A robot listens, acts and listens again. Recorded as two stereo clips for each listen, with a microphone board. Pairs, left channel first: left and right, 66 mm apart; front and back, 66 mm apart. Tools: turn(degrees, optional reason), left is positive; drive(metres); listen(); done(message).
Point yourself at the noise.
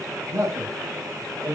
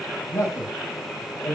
turn(degrees=-45, reason="The man speaking: 45° right.")
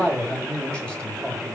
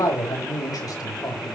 turn(degrees=10, reason="The man speaking is now 10° left.")
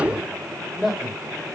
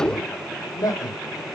done("Facing the man speaking, over 4 m away.")